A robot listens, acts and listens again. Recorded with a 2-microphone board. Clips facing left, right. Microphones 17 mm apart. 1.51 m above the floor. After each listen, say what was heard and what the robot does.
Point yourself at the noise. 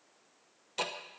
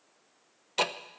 The ticking: about 35° right or 145° right. Turn 35° right.
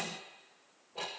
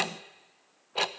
So it is at 105° right. Turn 105° right.
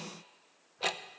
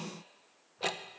The ticking is now 10° left. Turn 10° left.
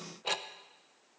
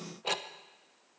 Found it: ticking, straight ahead.